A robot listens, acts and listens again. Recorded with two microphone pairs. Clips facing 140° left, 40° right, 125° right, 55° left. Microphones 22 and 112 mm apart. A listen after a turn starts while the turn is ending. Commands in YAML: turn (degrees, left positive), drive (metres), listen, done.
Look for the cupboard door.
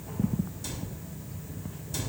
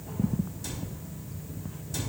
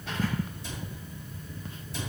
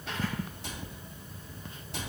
turn: 50
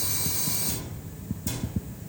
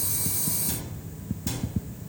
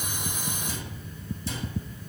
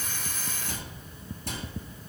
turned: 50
turn: 25
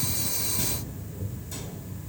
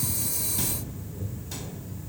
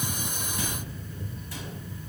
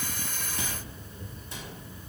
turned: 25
listen: true
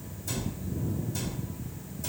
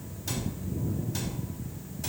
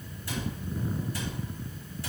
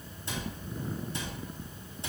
turn: -10
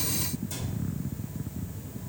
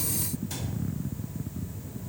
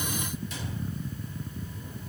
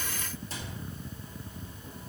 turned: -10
done: "Found it: a cupboard door, straight ahead, 2 to 4 m away."